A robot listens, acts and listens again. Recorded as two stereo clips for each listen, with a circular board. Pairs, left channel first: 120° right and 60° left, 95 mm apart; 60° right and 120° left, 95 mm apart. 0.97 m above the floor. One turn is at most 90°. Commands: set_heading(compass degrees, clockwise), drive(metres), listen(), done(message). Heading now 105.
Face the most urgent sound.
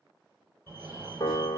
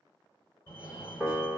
done("Facing the fire alarm.")